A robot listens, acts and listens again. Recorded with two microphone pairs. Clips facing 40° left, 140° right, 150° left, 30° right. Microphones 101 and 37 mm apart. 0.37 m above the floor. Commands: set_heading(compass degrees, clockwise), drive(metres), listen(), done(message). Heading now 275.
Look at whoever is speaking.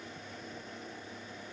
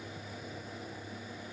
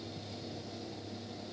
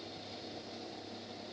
listen()
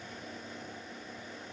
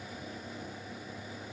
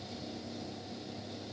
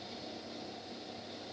listen()
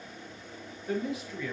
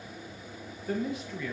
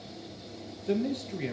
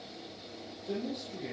set_heading(150)
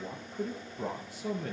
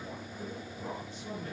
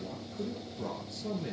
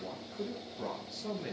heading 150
set_heading(110)
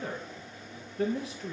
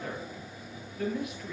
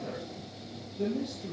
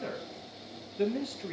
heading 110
set_heading(130)
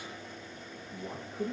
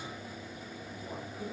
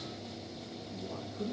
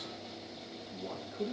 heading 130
done("Found it: a man speaking, straight ahead, over 4 m away.")